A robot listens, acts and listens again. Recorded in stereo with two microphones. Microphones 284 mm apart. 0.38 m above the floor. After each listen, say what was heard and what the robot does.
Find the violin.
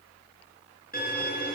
The violin: about 30° left or 150° left. Turn 30° left.
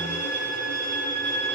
So it is at 115° left. Turn 115° left.
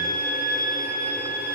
The violin is now 35° left. Turn 35° left.
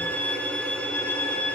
Facing the violin, 2 to 4 m away.